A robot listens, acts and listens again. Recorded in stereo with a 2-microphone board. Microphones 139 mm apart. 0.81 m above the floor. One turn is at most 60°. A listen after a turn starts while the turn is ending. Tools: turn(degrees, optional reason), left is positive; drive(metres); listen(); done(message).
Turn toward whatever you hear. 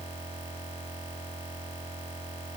listen()
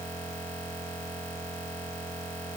listen()
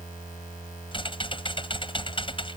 turn(degrees=40, reason="The typing on a keyboard: about 40° left or 140° left.")
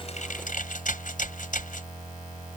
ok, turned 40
turn(degrees=60, reason="So it is at 105° left.")
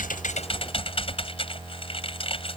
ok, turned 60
turn(degrees=45, reason="The typing on a keyboard is now 45° left.")
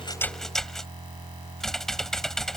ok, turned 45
done("Facing the typing on a keyboard.")